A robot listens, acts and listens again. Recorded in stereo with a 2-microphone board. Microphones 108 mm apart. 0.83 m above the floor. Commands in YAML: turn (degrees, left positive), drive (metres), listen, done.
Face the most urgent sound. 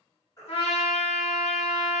turn: 35
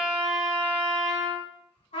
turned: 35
listen: true
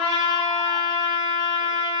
listen: true
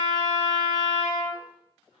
done: "I heard a baby crying, but can't make it out now. It was about straight ahead or 110° left."